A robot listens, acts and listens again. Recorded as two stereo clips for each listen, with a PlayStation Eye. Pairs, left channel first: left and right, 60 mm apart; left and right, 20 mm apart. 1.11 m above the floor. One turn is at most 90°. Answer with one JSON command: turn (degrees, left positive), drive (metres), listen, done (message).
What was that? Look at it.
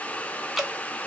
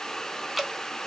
{"turn": -30}
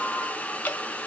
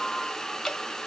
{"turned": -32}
{"turn": 30}
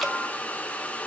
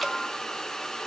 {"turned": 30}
{"listen": true}
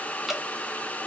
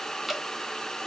{"done": "Found it: dripping, straight ahead."}